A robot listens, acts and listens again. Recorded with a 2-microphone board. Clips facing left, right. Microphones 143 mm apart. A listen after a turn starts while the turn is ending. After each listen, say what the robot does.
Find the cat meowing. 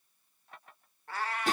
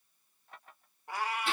Turn 30° right.
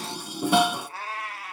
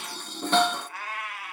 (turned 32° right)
Turn 40° left.
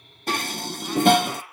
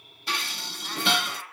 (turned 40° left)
Turn 15° left.
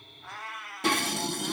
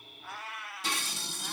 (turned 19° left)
Facing the cat meowing, 2 to 4 m away.